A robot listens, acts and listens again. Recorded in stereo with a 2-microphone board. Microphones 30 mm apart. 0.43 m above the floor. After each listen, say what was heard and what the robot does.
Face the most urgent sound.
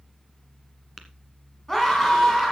Turn 30° left.
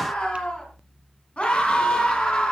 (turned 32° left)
So it is at 135° left. Turn 135° left.
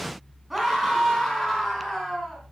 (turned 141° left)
Found it: a scream, straight ahead, 2 to 4 m away.